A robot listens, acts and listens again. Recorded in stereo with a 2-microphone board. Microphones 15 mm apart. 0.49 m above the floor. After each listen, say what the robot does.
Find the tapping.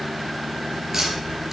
Turn 20° right.
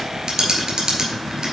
Turn 140° right.
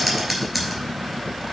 Found it: tapping, straight ahead, 2 to 4 m away.